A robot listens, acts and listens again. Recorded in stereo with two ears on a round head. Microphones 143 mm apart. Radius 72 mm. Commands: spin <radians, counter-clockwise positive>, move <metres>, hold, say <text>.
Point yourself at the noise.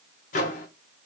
spin 0.87
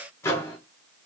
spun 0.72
spin 0.35
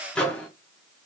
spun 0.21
say Facing the microwave, under 1 m away.